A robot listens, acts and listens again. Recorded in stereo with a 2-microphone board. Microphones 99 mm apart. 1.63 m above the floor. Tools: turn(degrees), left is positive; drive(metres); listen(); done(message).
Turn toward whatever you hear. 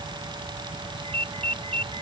turn(degrees=-90)
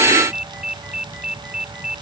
done("Facing the ringtone.")